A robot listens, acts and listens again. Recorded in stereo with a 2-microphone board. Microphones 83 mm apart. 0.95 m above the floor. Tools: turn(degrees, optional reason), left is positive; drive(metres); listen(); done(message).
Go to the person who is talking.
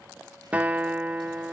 listen()
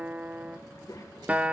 turn(degrees=55, reason="The child speaking: about 55° left or 125° left.")
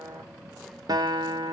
listen()
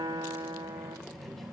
drive(metres=1.0)
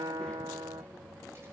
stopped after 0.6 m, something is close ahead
turn(degrees=15, reason="The child speaking is now 15° left.")
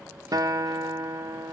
listen()
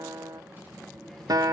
done("Something is in my way. I am facing the child speaking but have not reached it.")